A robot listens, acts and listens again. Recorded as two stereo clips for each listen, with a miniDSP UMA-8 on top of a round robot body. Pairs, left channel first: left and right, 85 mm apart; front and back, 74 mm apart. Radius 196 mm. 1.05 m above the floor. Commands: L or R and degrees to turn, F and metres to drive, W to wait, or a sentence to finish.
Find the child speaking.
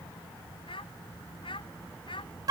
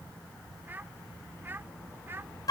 L120
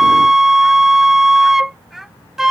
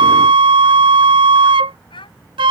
Facing the child speaking.